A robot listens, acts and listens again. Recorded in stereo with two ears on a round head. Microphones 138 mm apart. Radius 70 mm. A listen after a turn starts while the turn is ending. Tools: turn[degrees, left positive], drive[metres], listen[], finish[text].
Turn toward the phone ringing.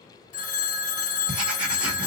Thought: The phone ringing: about 55° left or 125° left.
Action: turn[55]
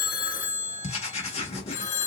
Thought: So it is at 60° left.
Action: turn[60]
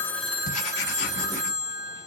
Thought: The phone ringing is now 25° right.
Action: turn[-25]
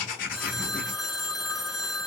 Action: finish[Found it: a phone ringing, straight ahead, 1 to 2 m away.]